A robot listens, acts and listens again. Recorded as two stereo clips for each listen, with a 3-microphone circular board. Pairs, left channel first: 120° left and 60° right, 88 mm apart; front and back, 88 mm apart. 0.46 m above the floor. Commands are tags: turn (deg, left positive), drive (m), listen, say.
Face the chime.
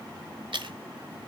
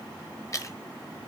<listen/>
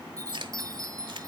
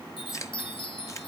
<turn deg="-10"/>
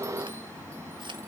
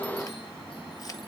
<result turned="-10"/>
<listen/>
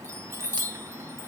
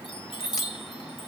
<say>Found it: a chime, straight ahead, 1 to 2 m away.</say>